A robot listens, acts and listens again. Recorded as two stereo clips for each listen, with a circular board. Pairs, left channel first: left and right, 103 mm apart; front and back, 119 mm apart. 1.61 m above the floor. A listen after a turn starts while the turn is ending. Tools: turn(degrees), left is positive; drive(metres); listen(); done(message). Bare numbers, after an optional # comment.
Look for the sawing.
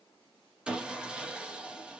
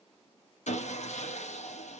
# The sawing: 10° right.
turn(-10)
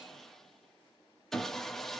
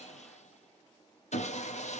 done("Facing the sawing, under 1 m away.")